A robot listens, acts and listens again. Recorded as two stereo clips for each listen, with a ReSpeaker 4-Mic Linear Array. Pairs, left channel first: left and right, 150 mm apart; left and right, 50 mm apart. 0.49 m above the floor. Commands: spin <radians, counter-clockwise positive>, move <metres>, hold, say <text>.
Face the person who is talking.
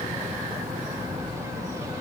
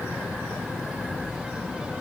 hold
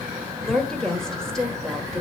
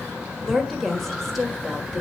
spin 0.52
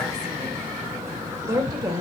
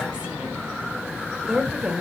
spin -0.52
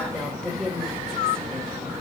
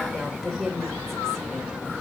say Found it: a woman speaking, straight ahead, 1 to 2 m away.